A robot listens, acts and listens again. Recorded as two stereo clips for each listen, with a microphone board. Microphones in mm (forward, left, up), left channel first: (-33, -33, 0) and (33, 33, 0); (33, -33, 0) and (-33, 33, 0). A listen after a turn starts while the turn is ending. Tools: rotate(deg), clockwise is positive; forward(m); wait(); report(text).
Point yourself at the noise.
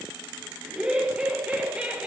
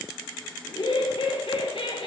rotate(35)
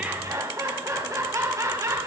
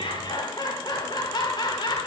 rotate(10)
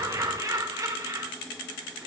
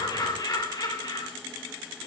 report("Facing the laughter, over 4 m away.")